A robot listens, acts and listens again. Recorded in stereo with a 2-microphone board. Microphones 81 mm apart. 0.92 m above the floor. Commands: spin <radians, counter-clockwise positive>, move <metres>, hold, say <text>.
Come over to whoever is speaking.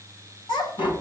spin 1.13
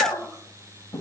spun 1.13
move 1.0
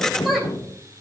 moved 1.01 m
move 1.0
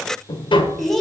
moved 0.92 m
move 1.0
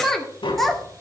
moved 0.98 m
move 1.0
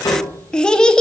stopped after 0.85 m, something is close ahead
spin 0.17
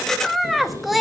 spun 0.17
say Arrived at the child speaking, straight ahead.